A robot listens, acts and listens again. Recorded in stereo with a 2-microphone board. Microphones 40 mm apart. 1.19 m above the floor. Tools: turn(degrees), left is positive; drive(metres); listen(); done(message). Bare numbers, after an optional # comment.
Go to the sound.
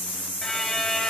turn(30)
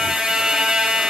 # So it is at 15° right.
turn(-15)
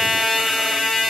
drive(1.0)
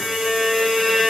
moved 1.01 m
drive(1.0)
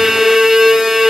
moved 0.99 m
# The violin is now 10° right.
turn(-10)
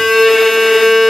drive(1.0)
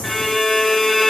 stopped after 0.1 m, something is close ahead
done("Arrived at the violin, straight ahead.")